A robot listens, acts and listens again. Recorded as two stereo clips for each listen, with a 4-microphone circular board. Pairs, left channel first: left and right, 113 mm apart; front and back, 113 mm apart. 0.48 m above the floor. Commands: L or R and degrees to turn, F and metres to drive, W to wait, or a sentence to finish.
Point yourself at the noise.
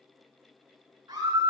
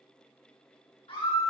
R40
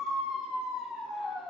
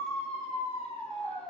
Facing the scream.